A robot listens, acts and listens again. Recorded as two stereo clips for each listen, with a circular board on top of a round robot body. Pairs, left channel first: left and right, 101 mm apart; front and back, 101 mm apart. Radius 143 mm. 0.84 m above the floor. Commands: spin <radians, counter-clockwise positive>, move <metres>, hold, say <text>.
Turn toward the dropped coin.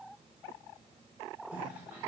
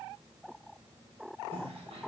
hold
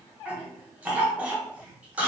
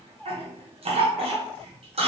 hold
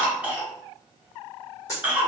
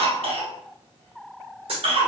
spin 2.71
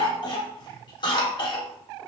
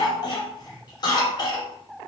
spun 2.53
spin 0.17
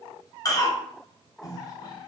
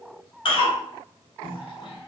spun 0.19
say Facing where the dropped coin came from. I can't hear it now.